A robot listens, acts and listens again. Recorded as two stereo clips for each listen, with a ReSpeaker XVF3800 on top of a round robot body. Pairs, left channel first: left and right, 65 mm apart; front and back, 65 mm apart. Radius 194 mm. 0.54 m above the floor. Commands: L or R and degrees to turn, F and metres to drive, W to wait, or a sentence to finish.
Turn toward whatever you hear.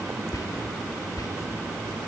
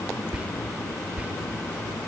L110
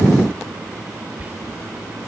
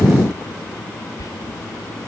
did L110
R25
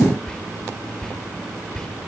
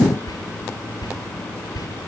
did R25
L10
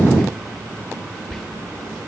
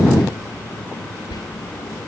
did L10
Found it: whispering, straight ahead.